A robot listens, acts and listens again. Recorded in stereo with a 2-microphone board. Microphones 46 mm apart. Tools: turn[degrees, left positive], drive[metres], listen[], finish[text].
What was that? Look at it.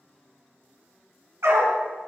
Action: turn[-90]
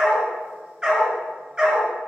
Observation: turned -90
Thought: So it is at 15° right.
Action: turn[-15]
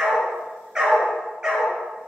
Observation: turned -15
Thought: The dog barking is now 15° right.
Action: turn[-15]
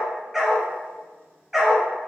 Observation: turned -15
Action: finish[Found it: a dog barking, straight ahead, 2 to 4 m away.]